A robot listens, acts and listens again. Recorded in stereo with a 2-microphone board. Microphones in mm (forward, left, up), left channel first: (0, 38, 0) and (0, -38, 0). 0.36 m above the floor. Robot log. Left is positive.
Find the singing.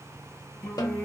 note: The singing: about 25° left or 155° left.
cmd yaw +25
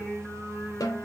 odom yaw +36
note: So it is at 15° right.
cmd yaw -15
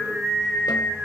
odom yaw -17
end: Found it: singing, straight ahead.